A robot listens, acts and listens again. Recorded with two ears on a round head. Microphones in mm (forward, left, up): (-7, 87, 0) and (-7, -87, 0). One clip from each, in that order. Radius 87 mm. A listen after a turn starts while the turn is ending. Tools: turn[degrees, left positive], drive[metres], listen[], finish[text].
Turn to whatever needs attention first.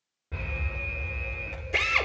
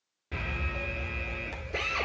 Thought: The alarm: about 65° right or 115° right.
Action: turn[-65]
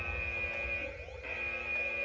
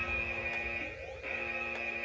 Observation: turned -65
Thought: So it is at 10° right.
Action: turn[-10]
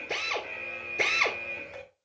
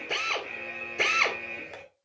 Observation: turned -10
Action: finish[Found it: an alarm, straight ahead.]